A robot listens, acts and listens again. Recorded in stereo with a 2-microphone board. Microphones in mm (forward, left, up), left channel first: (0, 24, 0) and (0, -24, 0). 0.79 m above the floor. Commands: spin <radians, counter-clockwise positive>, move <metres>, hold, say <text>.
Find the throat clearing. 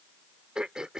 spin -0.52
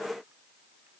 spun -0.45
hold
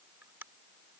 spin -2.44
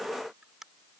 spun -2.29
spin -0.17
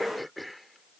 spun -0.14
say Found it: throat clearing, straight ahead.